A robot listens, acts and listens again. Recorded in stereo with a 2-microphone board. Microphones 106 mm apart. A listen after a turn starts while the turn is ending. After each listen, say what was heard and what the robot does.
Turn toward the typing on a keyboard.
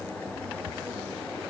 Keep listening.
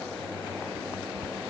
Keep listening.
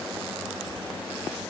I can't make out typing on a keyboard.